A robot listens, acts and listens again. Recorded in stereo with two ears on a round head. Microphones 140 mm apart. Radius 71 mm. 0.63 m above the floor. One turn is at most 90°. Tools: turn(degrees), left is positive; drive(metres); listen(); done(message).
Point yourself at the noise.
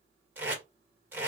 turn(degrees=-30)
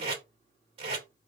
turn(degrees=-90)
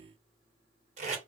turn(degrees=-55)
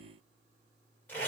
turn(degrees=15)
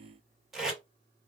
done("Found it: tape being pulled, straight ahead, 1 to 2 m away.")